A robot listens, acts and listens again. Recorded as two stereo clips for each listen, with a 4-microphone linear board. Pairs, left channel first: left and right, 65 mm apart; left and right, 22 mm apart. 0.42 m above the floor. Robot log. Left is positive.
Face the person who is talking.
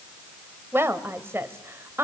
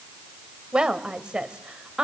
note: The woman speaking: about 35° right or 145° right.
cmd yaw -35
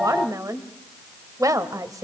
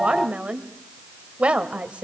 note: So it is at 105° right.
cmd yaw -105
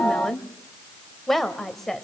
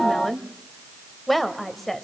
end: Facing the woman speaking, 1 to 2 m away.